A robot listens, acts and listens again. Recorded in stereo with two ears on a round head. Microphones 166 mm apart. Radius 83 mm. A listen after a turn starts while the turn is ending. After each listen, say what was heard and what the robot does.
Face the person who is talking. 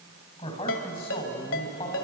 The man speaking: about 35° left or 145° left. Turn 35° left.
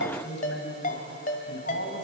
So it is at 110° left. Turn 110° left.
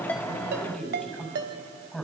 Facing the man speaking.